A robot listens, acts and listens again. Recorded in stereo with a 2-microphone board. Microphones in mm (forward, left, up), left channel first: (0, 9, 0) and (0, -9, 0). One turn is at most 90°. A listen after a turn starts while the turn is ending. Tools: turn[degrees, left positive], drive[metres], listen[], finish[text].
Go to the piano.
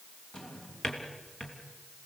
Action: listen[]
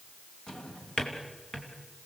Action: listen[]
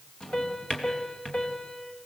Action: turn[90]
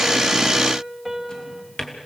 Action: drive[1.0]
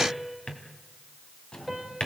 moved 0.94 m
Action: drive[1.0]
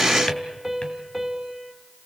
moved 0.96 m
Action: drive[1.0]
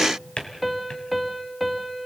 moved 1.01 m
Action: drive[1.0]
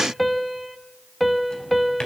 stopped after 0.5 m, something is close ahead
Action: finish[Arrived at the piano, straight ahead.]